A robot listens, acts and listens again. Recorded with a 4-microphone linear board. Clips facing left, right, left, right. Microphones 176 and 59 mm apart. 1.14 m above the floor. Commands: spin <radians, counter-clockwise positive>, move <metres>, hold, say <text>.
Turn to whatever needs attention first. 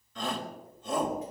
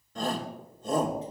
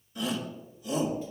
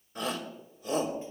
spin -0.79
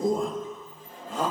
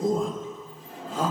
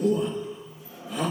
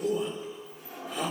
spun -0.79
say Found it: a shout, straight ahead.